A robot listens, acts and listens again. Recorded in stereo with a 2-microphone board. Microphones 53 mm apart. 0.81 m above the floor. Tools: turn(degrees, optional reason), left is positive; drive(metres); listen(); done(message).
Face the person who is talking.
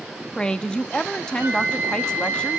turn(degrees=15, reason="The woman speaking: about 15° left or 165° left.")
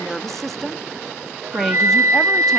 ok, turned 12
done("Found it: a woman speaking, straight ahead, under 1 m away.")